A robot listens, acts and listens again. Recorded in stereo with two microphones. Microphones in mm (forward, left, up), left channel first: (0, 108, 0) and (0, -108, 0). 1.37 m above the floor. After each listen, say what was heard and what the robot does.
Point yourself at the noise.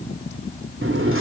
The sliding door: about 70° right or 110° right. Turn 70° right.
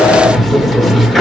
Facing the sliding door.